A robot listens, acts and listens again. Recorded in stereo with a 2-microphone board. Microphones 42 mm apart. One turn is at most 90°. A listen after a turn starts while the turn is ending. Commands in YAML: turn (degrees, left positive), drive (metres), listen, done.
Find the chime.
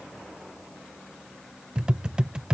listen: true
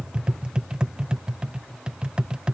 listen: true
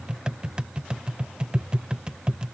done: "I can't make out a chime to turn to."